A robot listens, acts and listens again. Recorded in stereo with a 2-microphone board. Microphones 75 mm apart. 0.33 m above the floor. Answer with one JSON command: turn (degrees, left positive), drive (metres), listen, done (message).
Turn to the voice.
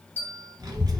{"turn": -55}
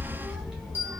{"done": "Found it: a child speaking, straight ahead."}